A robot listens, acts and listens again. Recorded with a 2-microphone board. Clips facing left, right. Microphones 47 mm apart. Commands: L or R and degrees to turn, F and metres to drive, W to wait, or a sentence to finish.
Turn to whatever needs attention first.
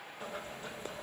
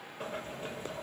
W
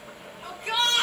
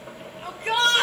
R60
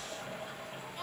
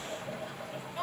W
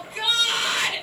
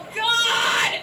R40
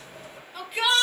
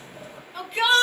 Found it: a shout, straight ahead, 1 to 2 m away.